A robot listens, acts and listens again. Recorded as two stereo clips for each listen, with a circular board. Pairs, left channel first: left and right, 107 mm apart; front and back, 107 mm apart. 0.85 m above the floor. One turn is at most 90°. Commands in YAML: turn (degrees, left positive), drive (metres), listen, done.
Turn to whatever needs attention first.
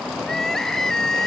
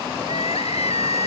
done: "Found it: crying, straight ahead."